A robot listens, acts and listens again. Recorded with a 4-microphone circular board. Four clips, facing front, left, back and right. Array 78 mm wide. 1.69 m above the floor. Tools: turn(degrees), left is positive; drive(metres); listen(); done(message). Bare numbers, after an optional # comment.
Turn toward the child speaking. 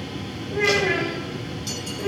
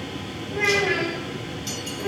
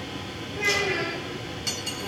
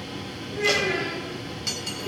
# The child speaking: 20° left.
turn(20)
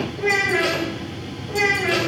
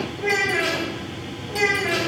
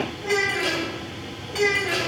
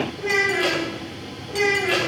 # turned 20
done("Found it: a child speaking, straight ahead.")